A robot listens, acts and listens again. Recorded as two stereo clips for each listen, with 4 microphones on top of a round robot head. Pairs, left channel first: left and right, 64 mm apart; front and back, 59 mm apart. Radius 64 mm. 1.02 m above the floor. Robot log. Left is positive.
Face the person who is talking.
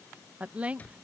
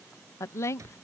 note: The woman speaking: 25° right.
cmd yaw -25
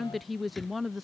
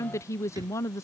end: Found it: a woman speaking, straight ahead.